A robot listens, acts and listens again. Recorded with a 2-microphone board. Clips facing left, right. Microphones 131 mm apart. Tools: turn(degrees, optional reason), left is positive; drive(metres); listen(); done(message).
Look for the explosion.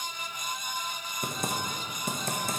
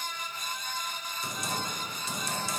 listen()
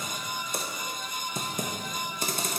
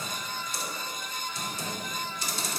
listen()
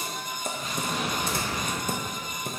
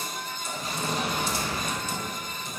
turn(degrees=-35, reason="The explosion: about 35° right or 145° right.")
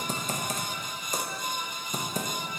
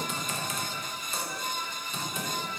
listen()
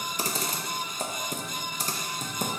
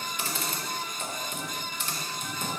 done("I heard an explosion, but can't make it out now. It was about straight ahead or 110° right.")